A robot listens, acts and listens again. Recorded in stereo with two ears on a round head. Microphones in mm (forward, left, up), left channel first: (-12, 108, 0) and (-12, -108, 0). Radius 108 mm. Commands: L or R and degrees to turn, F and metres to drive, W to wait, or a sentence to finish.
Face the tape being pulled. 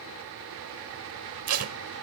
R65
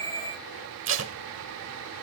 R50
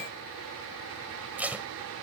Facing the tape being pulled.